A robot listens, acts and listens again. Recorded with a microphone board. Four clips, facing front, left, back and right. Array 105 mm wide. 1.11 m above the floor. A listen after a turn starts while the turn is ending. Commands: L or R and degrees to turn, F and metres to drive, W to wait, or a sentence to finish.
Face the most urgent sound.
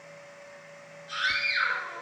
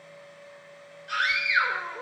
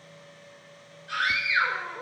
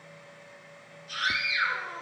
L115
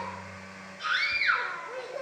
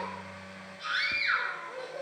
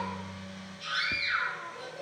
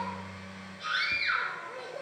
Facing the scream.